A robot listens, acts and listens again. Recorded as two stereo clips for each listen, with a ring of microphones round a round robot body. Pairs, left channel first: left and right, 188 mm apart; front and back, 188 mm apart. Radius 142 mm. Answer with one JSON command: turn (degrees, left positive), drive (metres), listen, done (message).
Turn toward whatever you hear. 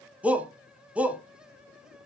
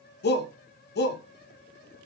{"done": "Facing the shout."}